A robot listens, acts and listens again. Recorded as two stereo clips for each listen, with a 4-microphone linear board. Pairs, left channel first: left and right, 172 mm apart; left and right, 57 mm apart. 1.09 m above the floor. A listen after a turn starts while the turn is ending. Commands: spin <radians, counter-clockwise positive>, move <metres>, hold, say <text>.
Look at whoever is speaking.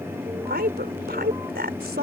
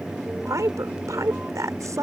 spin -1.22
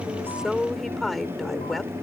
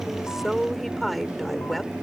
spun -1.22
say Facing the woman speaking.